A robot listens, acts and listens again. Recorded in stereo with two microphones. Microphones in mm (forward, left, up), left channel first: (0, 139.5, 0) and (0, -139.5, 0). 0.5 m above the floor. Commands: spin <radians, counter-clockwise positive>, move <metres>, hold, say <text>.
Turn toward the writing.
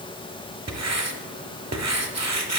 spin -1.57
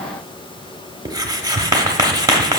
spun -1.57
spin -0.26
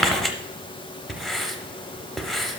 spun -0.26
say Facing the writing, under 1 m away.